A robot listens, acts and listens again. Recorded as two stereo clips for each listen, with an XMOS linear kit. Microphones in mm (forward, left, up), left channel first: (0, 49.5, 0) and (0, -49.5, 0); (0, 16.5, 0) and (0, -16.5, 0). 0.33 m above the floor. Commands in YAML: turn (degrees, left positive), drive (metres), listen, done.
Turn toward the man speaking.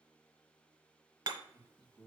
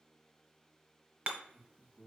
turn: -35
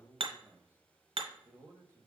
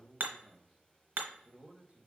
turn: -30
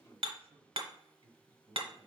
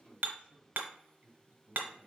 turn: -40
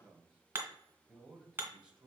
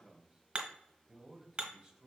turn: -10
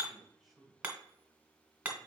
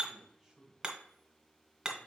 done: "Found it: a man speaking, straight ahead, 1 to 2 m away."